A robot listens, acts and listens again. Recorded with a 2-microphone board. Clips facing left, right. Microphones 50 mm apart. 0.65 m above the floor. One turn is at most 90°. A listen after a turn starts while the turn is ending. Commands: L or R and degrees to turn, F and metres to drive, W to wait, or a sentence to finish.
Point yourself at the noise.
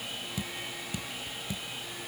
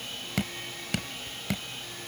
R90
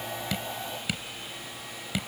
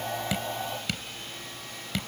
Facing the dripping.